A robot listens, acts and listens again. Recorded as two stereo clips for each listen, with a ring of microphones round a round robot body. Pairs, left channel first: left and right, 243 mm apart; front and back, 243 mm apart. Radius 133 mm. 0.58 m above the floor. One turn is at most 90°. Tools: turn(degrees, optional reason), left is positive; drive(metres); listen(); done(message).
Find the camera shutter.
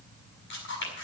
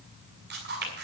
turn(degrees=90, reason="The camera shutter: 135° left.")
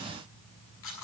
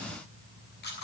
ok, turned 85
turn(degrees=50, reason="The camera shutter is now 50° left.")
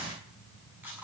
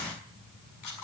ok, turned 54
done("Facing the camera shutter, over 4 m away.")